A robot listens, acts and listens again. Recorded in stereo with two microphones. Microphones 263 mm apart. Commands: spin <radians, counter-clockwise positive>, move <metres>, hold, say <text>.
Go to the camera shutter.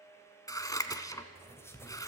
hold
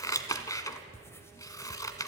hold
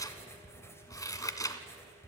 say I can't make out a camera shutter, only scissors and writing.